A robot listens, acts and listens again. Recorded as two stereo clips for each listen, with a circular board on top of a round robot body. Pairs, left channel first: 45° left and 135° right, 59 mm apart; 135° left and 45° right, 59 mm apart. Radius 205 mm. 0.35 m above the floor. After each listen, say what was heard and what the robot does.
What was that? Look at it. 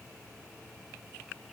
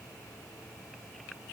Keep listening.
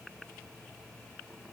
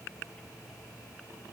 Keep listening.
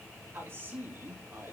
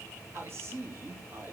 The man speaking: 90° right. Turn 90° right.
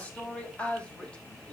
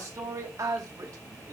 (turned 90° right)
The man speaking is now 30° right. Turn 30° right.
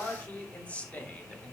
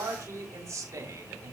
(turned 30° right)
The man speaking is now 20° right. Turn 20° right.
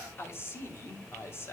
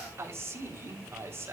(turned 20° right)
Found it: a man speaking, straight ahead, 2 to 4 m away.